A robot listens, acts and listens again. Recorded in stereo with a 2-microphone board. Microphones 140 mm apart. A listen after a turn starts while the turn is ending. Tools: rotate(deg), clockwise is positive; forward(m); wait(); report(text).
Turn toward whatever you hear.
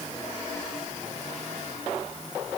wait()
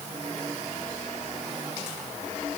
wait()
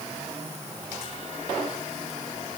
report("I can't make out anything to turn to.")